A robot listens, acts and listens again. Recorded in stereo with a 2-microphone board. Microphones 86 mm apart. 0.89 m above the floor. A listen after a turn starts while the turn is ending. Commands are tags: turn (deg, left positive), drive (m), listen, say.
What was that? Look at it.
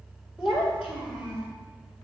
<turn deg="-25"/>
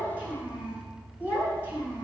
<turn deg="-30"/>
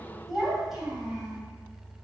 <say>Facing the child speaking.</say>